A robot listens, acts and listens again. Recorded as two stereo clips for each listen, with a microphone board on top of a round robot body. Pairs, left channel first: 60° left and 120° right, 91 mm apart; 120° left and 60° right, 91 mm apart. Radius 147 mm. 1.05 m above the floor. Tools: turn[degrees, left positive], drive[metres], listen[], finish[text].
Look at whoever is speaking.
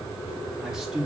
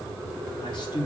Thought: The man speaking: 155° left.
Action: turn[155]
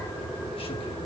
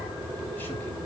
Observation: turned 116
Thought: Nothing new. It was at 40° left.
Action: turn[40]
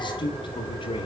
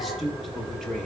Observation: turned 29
Thought: The man speaking is now 35° left.
Action: turn[35]
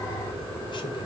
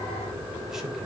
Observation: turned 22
Thought: Nothing new. It was at 15° left.
Action: turn[15]
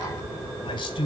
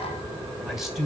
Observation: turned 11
Thought: The man speaking is now 30° left.
Action: turn[30]
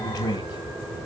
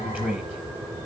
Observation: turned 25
Thought: The man speaking is now 10° left.
Action: turn[10]
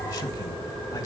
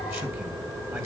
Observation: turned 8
Action: listen[]
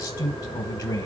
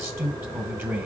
Action: finish[Found it: a man speaking, straight ahead, 1 to 2 m away.]